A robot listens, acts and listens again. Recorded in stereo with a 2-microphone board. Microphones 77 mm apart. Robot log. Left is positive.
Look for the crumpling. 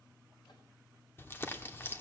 note: The crumpling: about 30° left or 150° left.
cmd yaw +30
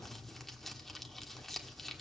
end: Facing the crumpling.